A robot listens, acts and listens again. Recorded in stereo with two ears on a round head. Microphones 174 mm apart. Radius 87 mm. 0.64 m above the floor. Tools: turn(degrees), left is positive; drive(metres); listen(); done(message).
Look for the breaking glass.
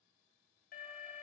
listen()
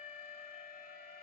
listen()
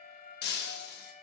turn(degrees=55)
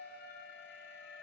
listen()
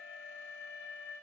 done("I heard breaking glass, but can't make it out now. It was about straight ahead or 70° left.")